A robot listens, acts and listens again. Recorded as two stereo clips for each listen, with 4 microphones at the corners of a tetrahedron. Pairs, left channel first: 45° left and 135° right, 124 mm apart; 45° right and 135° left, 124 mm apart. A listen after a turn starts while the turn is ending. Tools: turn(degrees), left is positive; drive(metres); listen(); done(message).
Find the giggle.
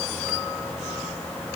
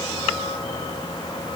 listen()
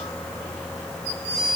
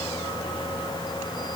listen()
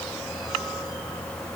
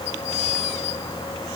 done("I can't make out a giggle.")